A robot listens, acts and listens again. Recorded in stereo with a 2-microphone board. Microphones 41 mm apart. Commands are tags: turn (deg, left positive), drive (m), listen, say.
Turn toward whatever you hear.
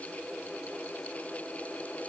<listen/>
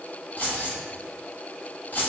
<turn deg="45"/>
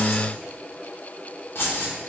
<turn deg="90"/>
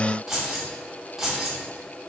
<turn deg="-10"/>
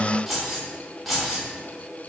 <say>Facing the keys jangling.</say>